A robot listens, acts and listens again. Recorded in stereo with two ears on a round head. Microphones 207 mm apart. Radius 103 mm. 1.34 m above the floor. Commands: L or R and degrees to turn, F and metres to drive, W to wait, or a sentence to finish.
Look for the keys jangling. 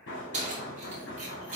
R35
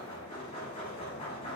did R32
W
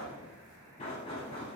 W
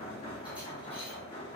I heard keys jangling, but can't make it out now. It was about straight ahead or 115° right.